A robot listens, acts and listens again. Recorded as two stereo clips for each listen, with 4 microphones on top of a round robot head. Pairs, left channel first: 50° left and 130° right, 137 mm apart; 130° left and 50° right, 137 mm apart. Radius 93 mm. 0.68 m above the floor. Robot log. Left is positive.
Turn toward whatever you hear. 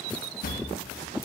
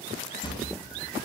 note: The drawer: 70° left.
cmd yaw +70
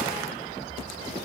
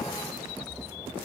cmd idle
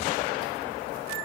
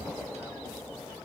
cmd idle
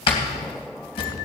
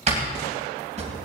end: Facing the drawer, 2 to 4 m away.